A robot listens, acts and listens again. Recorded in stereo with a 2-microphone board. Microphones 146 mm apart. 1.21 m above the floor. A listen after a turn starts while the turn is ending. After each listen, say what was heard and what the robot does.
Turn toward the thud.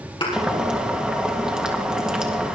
The thud: about 35° left or 145° left. Turn 35° left.
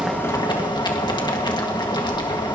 Keep listening.
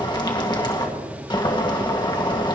I heard a thud, but can't make it out now. It was about straight ahead or 110° left.